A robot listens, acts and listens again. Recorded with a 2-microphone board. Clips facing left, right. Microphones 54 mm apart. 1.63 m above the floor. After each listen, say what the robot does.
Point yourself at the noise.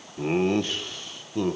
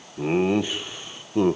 Turn 25° right.
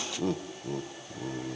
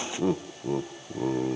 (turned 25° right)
Turn 40° right.
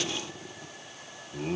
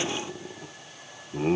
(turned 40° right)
Turn 30° right.
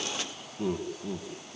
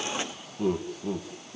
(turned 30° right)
Turn 10° right.
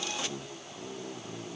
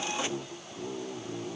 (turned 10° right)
Turn 10° right.
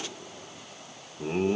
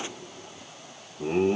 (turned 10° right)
Facing the laughter.